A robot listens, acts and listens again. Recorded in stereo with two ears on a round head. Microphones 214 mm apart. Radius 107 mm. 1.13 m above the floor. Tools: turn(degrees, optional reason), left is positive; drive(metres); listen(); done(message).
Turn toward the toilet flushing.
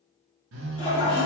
turn(degrees=25, reason="The toilet flushing: about 25° left or 155° left.")
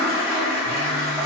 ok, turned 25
done("Found it: a toilet flushing, straight ahead, 1 to 2 m away.")